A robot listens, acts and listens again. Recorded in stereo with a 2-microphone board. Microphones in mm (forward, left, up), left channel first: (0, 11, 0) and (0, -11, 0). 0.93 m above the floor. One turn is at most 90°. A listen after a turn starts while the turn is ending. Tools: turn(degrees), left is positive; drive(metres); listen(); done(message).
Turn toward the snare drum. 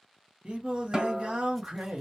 turn(degrees=-35)
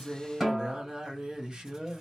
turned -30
done("Facing the snare drum, 1 to 2 m away.")